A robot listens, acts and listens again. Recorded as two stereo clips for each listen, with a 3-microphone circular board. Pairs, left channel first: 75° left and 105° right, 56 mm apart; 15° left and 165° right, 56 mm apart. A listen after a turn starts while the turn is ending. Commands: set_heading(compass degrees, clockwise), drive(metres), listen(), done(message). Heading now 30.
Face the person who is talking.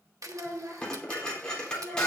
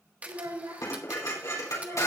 set_heading(185)
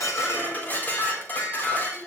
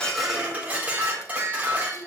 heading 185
set_heading(205)
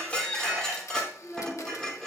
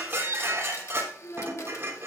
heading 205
done("Facing the child speaking.")